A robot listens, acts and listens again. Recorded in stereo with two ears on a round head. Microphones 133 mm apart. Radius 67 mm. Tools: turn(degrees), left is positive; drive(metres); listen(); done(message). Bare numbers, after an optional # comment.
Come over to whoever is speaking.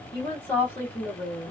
turn(30)
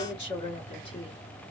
# So it is at 135° left.
turn(135)
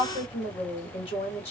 # The woman speaking is now 50° left.
turn(50)
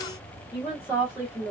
# The woman speaking is now 10° right.
turn(-10)
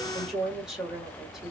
drive(1.0)
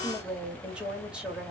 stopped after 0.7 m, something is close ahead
# The woman speaking is now 10° right.
turn(-10)
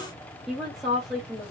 done("Arrived at the woman speaking, straight ahead.")